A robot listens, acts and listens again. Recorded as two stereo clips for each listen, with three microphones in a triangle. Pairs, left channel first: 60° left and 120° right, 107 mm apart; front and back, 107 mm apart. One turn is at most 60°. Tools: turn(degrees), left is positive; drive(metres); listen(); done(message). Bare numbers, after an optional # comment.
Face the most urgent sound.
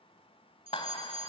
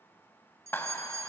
# The fire alarm: 125° right.
turn(-60)
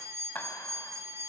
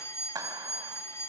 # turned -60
# The fire alarm is now 60° right.
turn(-60)
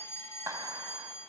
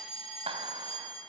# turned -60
done("Found it: a fire alarm, straight ahead.")